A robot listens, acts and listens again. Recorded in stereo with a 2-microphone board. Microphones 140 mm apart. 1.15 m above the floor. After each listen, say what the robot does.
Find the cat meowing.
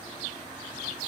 Keep listening.
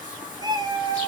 Turn 30° right.
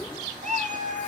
Turn 120° right.
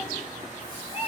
Turn 45° left.
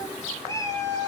Turn 20° left.
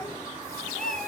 Facing the cat meowing.